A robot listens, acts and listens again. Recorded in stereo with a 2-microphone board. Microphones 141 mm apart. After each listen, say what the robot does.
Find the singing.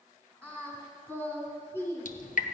Turn 20° left.
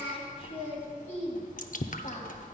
Turn 125° left.
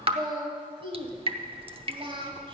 Turn 40° right.
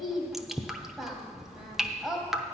Found it: singing, straight ahead.